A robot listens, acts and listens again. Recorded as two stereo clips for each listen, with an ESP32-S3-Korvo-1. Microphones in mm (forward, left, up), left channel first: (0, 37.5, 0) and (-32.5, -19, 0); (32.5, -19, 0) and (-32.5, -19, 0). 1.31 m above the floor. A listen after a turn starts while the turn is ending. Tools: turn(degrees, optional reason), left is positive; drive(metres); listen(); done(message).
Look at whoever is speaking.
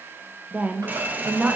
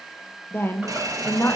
turn(degrees=-55, reason="The woman speaking: 55° right.")
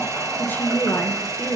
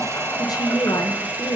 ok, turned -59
done("Facing the woman speaking.")